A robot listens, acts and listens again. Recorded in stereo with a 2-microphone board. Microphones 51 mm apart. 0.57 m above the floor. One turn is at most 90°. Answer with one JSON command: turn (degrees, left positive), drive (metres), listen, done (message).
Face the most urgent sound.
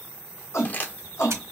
{"turn": 60}
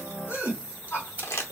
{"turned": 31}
{"turn": 45}
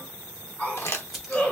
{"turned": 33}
{"turn": 10}
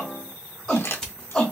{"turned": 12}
{"done": "Found it: a shout, straight ahead."}